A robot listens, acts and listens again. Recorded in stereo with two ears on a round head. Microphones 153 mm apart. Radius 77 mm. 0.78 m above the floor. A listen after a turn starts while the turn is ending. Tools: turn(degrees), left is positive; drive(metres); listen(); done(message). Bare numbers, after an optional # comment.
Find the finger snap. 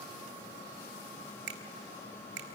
# The finger snap: about 70° right or 110° right.
turn(-70)
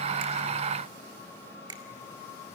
# So it is at 25° right.
turn(-25)
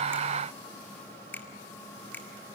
# The finger snap is now 10° left.
turn(10)
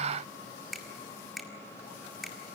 done("Found it: a finger snap, straight ahead.")